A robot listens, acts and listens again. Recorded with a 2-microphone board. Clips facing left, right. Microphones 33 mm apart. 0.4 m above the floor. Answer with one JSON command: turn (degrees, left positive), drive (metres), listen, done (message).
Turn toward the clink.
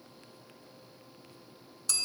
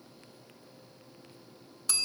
{"listen": true}
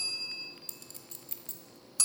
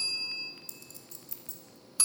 {"turn": 55}
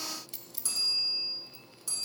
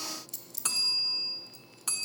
{"turn": 25}
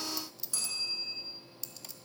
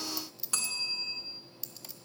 {"turn": -10}
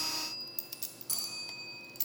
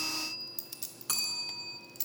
{"done": "Found it: a clink, straight ahead, under 1 m away."}